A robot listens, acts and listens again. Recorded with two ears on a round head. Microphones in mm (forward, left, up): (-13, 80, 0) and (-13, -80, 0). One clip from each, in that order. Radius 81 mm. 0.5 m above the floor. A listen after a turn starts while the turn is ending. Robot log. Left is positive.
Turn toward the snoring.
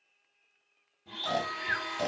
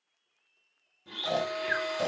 cmd yaw +30
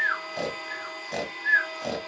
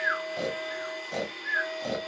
note: So it is at 155° left.
cmd yaw +155
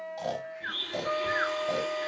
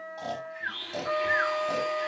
note: The snoring is now 10° right.
cmd yaw -10
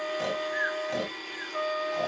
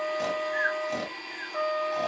end: Found it: snoring, straight ahead, 1 to 2 m away.